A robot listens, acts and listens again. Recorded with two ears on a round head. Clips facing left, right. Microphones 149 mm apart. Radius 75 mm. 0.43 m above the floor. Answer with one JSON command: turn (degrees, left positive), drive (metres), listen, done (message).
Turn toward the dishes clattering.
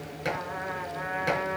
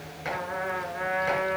{"turn": 45}
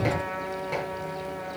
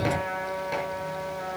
{"listen": true}
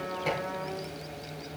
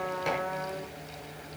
{"done": "Found it: dishes clattering, straight ahead, 2 to 4 m away."}